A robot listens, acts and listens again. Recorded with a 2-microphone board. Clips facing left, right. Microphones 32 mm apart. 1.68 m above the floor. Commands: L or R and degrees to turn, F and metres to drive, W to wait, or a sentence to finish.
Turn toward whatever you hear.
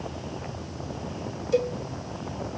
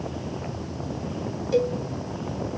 R30
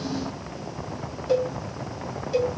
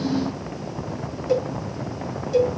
L20
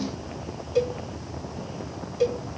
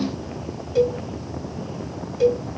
Found it: a cowbell, straight ahead.